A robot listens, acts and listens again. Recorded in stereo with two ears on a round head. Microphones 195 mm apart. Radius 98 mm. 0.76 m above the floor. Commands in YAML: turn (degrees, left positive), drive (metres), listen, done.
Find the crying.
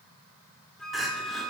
turn: 30
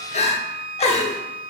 turn: 150
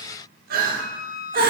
turn: -45
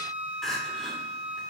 done: "Facing the crying."